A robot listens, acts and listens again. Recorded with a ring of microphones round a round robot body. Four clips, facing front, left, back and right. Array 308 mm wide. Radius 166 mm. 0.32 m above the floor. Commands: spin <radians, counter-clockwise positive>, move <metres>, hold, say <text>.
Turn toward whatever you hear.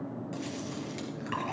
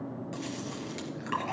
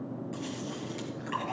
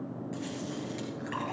spin 1.05
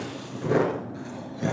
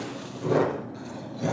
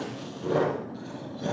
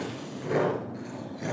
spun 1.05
spin 0.26
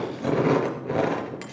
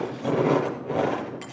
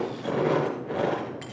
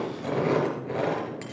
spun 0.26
say Facing the chewing.